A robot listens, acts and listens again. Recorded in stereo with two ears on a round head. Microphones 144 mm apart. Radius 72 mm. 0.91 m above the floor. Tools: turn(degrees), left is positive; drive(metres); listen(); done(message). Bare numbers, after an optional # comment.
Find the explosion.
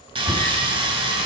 listen()
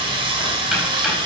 listen()
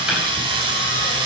done("I can't make out an explosion to turn to.")